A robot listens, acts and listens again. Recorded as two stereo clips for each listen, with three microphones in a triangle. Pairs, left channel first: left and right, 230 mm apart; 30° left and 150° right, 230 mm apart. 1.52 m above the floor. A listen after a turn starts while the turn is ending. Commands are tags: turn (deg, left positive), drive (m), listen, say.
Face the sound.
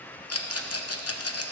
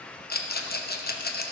<turn deg="80"/>
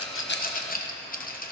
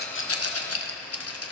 <turn deg="40"/>
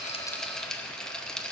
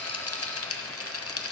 <say>Facing the rattle, 1 to 2 m away.</say>